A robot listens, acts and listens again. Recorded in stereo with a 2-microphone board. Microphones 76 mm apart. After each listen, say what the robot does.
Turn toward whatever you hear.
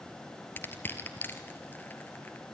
Turn 25° left.
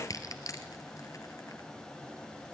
Turn 130° left.
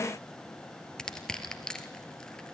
Turn 10° left.
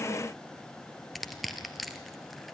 Found it: crushing, straight ahead, 1 to 2 m away.